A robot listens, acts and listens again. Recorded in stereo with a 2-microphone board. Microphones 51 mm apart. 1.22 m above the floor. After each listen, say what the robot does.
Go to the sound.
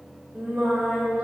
Turn 30° right.
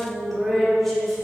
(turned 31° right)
Drive 1.0 m forward.
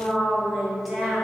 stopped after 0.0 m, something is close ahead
Blocked. The singing is further on, straight ahead.